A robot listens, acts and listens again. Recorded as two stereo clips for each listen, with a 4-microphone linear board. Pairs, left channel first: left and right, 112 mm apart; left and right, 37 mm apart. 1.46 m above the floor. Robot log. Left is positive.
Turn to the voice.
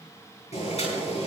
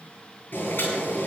cmd idle
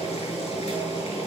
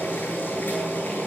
cmd idle
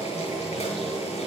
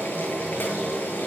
end: I can't make out anyone speaking, only boiling.